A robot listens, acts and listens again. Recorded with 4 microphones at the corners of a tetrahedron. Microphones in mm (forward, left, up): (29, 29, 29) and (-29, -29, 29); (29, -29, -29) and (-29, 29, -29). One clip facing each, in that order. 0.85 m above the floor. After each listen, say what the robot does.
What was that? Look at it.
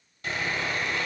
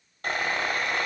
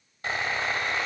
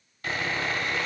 Turn 105° right.
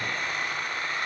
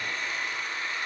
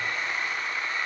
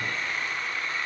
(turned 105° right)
Turn 30° left.
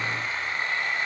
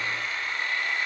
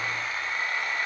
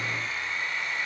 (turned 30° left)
Turn 10° right.
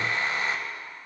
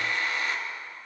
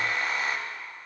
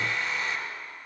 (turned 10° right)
Found it: sawing, straight ahead.